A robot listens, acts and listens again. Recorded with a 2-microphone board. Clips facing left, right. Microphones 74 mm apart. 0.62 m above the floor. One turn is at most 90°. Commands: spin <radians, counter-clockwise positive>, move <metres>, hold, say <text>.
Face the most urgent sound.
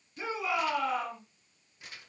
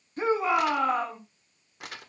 spin -0.70
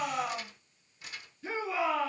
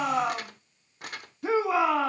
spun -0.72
spin -1.57
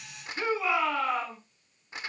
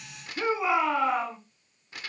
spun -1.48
spin -0.26
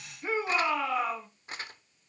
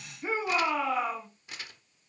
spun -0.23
say Found it: a shout, straight ahead.